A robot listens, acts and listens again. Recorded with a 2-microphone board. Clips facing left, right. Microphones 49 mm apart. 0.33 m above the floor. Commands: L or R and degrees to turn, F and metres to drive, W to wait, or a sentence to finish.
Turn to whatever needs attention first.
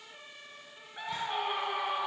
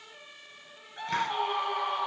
L30
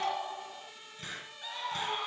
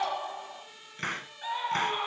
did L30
R20
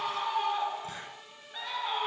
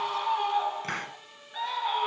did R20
Facing the scream.